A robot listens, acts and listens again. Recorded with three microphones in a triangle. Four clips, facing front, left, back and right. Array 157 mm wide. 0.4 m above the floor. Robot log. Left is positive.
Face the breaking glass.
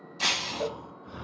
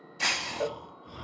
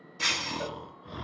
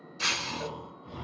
note: The breaking glass: 45° left.
cmd yaw +45
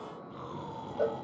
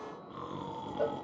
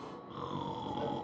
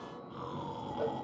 end: Facing where the breaking glass came from. I can't hear it now.